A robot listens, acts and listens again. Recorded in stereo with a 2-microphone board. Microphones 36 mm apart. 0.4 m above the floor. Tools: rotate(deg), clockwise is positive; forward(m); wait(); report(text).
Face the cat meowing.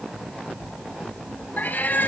rotate(-55)
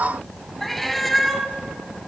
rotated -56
report("Facing the cat meowing, 1 to 2 m away.")